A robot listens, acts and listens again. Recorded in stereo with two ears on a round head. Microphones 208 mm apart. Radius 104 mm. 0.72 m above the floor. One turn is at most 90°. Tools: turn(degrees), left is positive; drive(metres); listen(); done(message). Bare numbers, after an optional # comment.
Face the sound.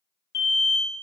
# The alarm: about 50° left or 130° left.
turn(50)
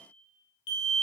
# So it is at 70° left.
turn(70)
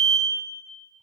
done("Found it: an alarm, straight ahead.")